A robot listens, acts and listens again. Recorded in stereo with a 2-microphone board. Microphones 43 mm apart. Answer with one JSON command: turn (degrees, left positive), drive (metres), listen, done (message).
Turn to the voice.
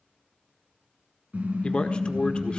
{"turn": 25}
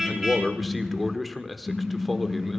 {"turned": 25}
{"done": "Facing the man speaking, 1 to 2 m away."}